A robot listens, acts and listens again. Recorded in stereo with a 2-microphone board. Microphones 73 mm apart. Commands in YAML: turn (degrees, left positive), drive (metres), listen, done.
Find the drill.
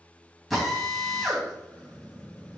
turn: 30
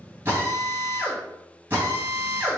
turn: -35
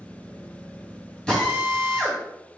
turn: 10
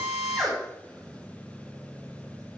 done: "Facing the drill, 2 to 4 m away."